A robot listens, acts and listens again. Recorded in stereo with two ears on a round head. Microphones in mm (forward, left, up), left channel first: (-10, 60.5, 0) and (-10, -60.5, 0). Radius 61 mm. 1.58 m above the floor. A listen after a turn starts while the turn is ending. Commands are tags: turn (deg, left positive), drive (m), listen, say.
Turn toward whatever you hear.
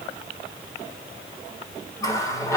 <turn deg="25"/>
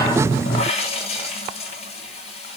<turn deg="130"/>
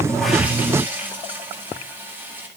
<turn deg="-15"/>
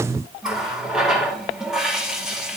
<say>Found it: a running tap, straight ahead, 2 to 4 m away.</say>